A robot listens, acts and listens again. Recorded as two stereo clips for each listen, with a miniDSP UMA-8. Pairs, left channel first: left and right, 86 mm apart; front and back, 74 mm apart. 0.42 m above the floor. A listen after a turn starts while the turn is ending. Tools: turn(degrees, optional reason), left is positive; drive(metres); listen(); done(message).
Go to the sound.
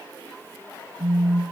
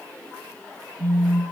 turn(degrees=45, reason="The phone buzzing: 45° left.")
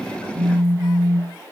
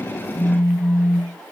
turn(degrees=-15, reason="The phone buzzing is now 15° right.")
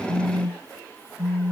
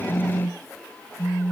drive(metres=1.0)
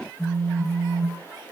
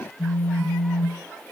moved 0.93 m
drive(metres=1.0)
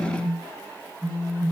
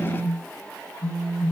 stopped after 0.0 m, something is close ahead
done("Arrived at the phone buzzing, straight ahead.")